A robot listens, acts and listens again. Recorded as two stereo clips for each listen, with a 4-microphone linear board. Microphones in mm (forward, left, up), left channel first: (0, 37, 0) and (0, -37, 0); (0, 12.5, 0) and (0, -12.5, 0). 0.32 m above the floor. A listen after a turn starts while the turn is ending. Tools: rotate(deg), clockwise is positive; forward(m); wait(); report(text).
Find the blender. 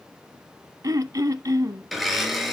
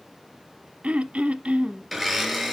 rotate(-30)
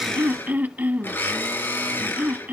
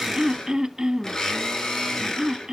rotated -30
rotate(-150)
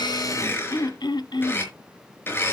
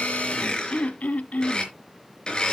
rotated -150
rotate(-30)
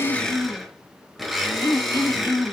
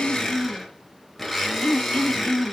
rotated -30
report("Found it: a blender, straight ahead, over 4 m away.")